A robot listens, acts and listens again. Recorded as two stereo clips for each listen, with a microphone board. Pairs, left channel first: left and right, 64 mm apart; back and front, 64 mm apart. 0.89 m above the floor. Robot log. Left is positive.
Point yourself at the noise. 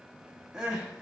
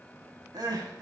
note: The crying: 10° right.
cmd yaw -10
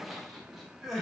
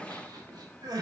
end: Facing the crying, under 1 m away.